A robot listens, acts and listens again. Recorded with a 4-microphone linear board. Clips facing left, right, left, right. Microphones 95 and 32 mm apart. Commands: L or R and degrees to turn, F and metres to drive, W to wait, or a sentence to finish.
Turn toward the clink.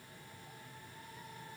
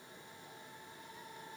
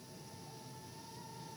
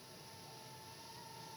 W
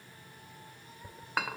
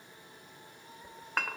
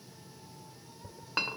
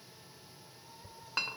L30
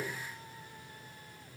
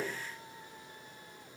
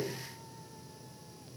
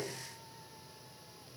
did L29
R20
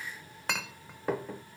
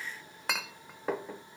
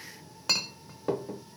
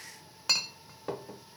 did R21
Facing the clink.